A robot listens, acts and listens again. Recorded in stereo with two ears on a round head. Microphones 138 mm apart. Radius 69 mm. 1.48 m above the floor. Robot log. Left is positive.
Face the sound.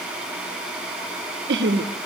cmd yaw -90
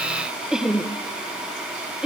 end: Facing the laughter, 1 to 2 m away.